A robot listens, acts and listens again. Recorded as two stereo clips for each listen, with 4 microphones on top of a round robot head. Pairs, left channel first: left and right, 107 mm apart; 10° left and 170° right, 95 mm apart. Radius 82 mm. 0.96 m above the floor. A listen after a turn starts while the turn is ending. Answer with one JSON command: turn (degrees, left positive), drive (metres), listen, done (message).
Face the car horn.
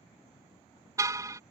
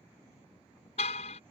{"turn": -30}
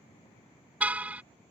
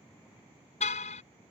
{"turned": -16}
{"turn": -15}
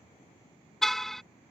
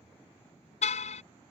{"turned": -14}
{"done": "Facing the car horn."}